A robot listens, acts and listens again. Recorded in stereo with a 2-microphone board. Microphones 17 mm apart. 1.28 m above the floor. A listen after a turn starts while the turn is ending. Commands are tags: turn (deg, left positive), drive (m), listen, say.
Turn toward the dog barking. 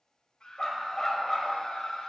<turn deg="15"/>
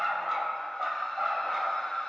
<turn deg="-30"/>
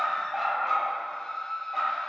<turn deg="-20"/>
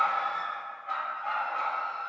<say>Facing the dog barking, 2 to 4 m away.</say>